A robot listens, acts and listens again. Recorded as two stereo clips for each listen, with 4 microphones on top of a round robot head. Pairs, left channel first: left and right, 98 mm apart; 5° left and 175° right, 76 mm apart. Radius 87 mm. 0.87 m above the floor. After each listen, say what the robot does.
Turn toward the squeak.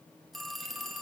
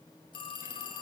Keep listening.
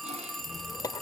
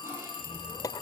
Turn 40° left.
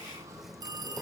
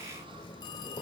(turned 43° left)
Found it: a squeak, straight ahead, under 1 m away.